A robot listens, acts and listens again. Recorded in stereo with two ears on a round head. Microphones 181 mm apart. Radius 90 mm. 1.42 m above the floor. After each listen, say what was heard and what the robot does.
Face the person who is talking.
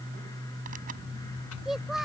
Turn 30° left.
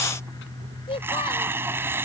So it is at 150° left. Turn 150° left.
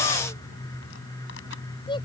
The child speaking is now 25° left. Turn 25° left.
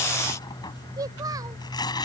The child speaking is now 20° right. Turn 20° right.
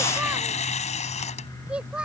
Facing the child speaking.